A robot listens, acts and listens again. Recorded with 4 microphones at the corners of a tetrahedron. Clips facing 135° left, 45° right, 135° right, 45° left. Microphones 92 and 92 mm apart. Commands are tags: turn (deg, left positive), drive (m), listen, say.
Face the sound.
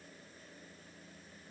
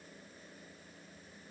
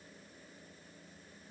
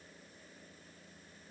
<listen/>
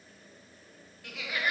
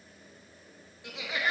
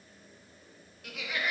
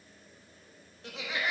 <say>Found it: laughter, straight ahead, 1 to 2 m away.</say>